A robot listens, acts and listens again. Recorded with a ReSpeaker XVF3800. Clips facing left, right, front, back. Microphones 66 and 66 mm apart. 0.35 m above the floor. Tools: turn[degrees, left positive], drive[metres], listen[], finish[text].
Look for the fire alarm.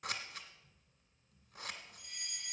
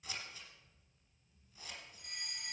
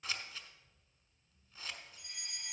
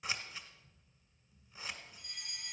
Thought: The fire alarm: 60° right.
Action: turn[-60]
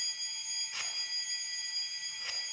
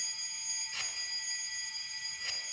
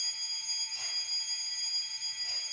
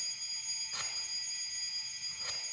Action: finish[Facing the fire alarm, 2 to 4 m away.]